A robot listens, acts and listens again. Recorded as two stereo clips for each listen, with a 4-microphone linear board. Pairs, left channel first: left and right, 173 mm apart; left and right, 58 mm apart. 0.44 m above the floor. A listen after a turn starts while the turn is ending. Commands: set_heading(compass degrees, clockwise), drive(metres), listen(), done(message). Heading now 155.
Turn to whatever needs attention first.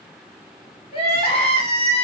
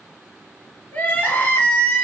set_heading(120)
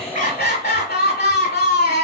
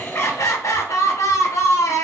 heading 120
set_heading(10)
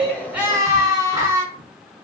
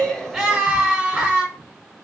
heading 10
set_heading(30)
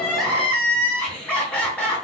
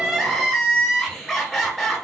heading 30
done("Found it: crying, straight ahead, 1 to 2 m away.")